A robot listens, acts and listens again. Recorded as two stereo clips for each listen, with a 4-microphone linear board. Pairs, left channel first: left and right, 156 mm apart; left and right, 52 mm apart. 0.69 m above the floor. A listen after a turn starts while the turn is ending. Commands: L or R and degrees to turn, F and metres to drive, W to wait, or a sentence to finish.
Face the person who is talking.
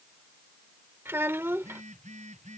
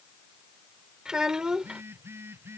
R30
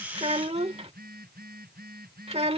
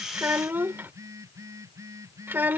R140
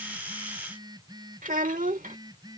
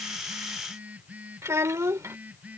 R60
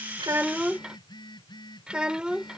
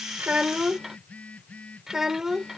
Facing the child speaking.